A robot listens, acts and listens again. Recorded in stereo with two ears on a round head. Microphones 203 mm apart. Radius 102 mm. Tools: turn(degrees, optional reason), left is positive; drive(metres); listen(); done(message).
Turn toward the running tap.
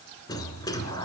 listen()
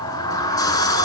listen()
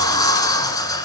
done("I can't make out a running tap to turn to.")